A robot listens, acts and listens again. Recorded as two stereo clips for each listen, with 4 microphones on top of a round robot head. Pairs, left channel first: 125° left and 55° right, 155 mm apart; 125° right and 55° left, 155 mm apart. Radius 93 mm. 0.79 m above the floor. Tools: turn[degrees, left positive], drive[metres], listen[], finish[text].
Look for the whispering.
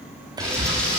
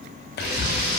Thought: The whispering: 120° right.
Action: turn[-120]
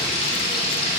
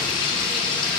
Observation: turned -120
Action: listen[]
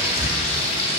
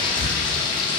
Thought: The whispering is now 15° left.
Action: turn[15]
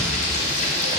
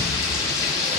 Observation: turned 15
Action: listen[]
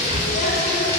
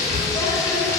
Action: finish[Found it: whispering, straight ahead.]